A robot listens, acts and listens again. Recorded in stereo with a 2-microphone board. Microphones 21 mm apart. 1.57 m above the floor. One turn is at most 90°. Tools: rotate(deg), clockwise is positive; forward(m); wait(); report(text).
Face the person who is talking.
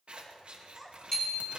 rotate(30)
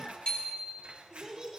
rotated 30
rotate(90)
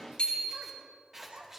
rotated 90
rotate(75)
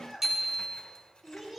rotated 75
rotate(10)
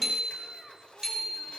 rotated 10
report("Facing the child speaking, 2 to 4 m away.")